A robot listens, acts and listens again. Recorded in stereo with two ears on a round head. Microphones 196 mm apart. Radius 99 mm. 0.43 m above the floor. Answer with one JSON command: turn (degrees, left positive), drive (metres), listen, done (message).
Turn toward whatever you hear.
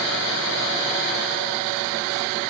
{"listen": true}
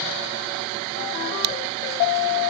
{"listen": true}
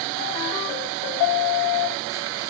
{"done": "I can't make out anything."}